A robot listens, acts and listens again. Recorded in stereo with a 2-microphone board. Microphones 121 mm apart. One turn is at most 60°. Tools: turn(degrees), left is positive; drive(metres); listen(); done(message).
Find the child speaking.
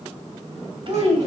turn(degrees=-50)
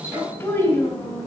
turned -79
turn(degrees=15)
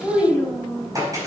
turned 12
done("Found it: a child speaking, straight ahead.")